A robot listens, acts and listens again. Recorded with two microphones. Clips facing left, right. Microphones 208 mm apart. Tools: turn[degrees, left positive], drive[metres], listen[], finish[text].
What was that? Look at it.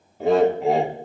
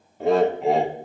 Action: turn[30]
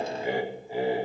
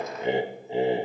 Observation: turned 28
Thought: So it is at 25° right.
Action: turn[-25]
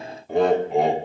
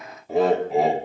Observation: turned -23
Action: finish[Facing the laughter, under 1 m away.]